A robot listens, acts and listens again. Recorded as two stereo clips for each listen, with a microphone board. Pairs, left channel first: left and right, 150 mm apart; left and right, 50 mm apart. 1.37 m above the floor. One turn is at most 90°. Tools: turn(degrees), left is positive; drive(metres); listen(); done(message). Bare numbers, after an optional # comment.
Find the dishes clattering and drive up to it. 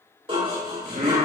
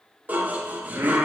# The dishes clattering: about 40° right or 140° right.
turn(-40)
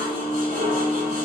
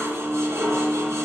# So it is at 100° right.
turn(-90)
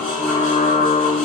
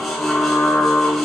# Nothing new. It was at 10° right.
turn(-10)
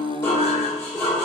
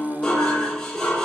# The dishes clattering is now 20° left.
turn(20)
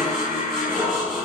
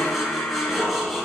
drive(1.0)
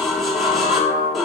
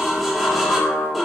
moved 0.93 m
drive(1.0)
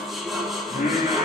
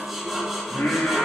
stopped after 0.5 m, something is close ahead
done("Arrived at the dishes clattering, straight ahead.")